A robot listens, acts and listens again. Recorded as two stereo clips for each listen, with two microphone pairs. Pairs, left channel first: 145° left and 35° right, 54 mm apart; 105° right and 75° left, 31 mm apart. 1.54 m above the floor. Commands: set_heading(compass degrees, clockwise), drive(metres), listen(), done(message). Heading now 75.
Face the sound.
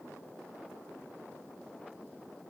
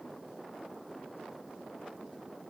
listen()
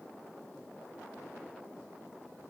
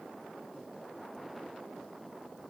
listen()
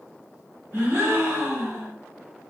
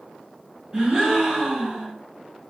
done("Facing the gasp, 1 to 2 m away.")